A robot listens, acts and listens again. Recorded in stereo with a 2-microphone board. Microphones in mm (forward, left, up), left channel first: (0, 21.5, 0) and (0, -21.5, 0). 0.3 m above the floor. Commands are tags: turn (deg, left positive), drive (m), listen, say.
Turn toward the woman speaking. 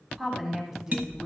<turn deg="-30"/>
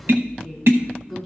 <say>Facing the woman speaking, 2 to 4 m away.</say>